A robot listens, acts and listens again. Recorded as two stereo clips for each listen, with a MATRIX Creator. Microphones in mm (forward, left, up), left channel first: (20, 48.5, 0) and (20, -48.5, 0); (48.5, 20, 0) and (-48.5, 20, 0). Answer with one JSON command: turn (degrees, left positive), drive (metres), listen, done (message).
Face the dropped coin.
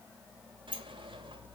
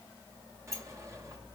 {"listen": true}
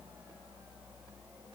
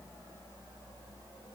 {"listen": true}
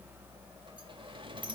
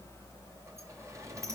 {"done": "I can't make out a dropped coin, only a sliding door."}